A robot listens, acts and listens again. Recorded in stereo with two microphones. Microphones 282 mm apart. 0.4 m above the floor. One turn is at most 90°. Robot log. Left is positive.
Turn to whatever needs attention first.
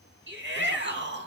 note: The shout: about 40° right or 140° right.
cmd yaw -40
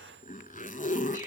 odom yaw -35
cmd idle
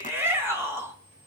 note: So it is at 10° right.
cmd yaw -10
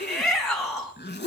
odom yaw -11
end: Facing the shout, 2 to 4 m away.